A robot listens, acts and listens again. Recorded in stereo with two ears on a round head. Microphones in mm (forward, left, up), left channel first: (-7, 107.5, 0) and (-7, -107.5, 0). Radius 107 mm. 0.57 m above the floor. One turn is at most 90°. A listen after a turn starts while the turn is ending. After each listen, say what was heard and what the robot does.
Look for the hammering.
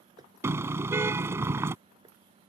The hammering: about 15° right or 165° right. Turn 15° right.
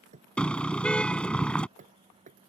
So it is at 150° right. Turn 90° right.
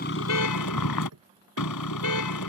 The hammering is now 70° right. Turn 70° right.
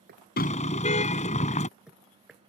Facing the hammering.